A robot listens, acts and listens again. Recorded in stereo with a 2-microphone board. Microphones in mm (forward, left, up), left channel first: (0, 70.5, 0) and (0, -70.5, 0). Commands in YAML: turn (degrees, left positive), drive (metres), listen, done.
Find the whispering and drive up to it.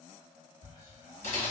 turn: 40
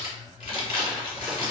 listen: true
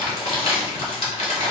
listen: true
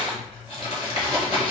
done: "I heard whispering, but can't make it out now. It was about straight ahead or 100° left. I did not reach it."